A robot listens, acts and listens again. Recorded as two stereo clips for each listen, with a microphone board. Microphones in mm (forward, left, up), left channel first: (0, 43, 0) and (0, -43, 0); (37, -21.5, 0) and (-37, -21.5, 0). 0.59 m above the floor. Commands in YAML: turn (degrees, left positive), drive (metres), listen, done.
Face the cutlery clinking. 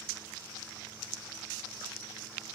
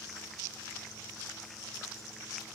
listen: true
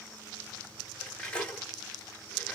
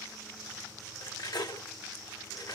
turn: 15
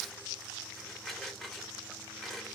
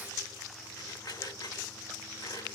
done: "Facing the cutlery clinking."